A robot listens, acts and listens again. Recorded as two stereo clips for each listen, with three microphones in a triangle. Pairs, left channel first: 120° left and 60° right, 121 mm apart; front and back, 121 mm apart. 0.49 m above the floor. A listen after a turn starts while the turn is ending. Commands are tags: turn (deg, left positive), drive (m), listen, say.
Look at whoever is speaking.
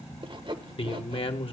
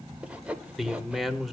<turn deg="90"/>
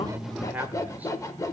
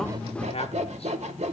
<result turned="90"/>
<turn deg="15"/>
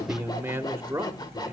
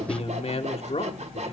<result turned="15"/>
<say>Facing the man speaking, 1 to 2 m away.</say>